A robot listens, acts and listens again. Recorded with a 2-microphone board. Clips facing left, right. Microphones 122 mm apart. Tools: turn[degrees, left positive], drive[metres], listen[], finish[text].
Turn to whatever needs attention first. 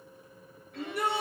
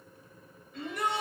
Action: turn[30]
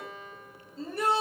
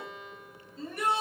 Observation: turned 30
Thought: So it is at 145° left.
Action: turn[145]
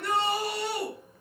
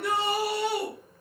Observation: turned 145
Thought: The shout is now 10° right.
Action: turn[-10]
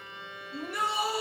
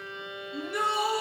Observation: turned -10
Action: finish[Facing the shout, 1 to 2 m away.]